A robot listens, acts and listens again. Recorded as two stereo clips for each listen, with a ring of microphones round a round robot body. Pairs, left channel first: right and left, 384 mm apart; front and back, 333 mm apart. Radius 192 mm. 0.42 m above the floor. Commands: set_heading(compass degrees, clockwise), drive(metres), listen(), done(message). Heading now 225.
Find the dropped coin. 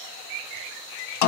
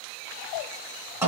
listen()
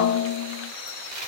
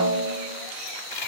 set_heading(190)
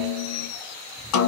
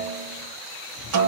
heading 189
done("Facing where the dropped coin came from. I can't hear it now.")